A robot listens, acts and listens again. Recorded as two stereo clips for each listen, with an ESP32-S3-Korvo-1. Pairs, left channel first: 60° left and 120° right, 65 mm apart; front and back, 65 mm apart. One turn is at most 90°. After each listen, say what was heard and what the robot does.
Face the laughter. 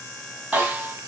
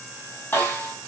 Keep listening.
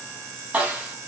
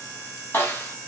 Keep listening.
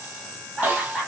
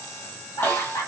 The laughter: 25° right. Turn 25° right.
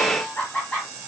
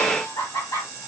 The laughter is now 10° right. Turn 10° right.
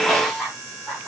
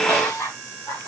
The laughter is now 15° right. Turn 15° right.
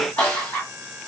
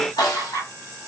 Found it: laughter, straight ahead, over 4 m away.